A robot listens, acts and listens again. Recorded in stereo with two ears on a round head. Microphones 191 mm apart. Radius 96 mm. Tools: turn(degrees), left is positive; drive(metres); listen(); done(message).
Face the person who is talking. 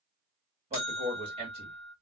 turn(degrees=-30)
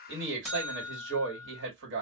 turn(degrees=-120)
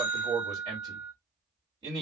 turn(degrees=-20)
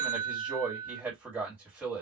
turn(degrees=-10)
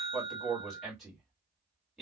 done("Found it: a man speaking, straight ahead.")